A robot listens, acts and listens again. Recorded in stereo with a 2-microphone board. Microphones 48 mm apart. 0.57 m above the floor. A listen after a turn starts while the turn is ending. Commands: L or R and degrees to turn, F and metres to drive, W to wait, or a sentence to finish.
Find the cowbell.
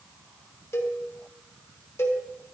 L70
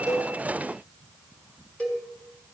L30
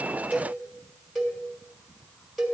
Found it: a cowbell, straight ahead, 2 to 4 m away.